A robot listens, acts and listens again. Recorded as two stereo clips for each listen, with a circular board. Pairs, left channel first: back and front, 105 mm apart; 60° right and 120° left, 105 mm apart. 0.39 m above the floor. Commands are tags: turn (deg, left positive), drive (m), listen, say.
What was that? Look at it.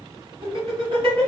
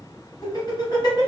<turn deg="-20"/>
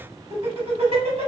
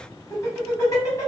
<turn deg="-10"/>
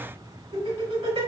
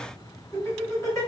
<say>Found it: laughter, straight ahead.</say>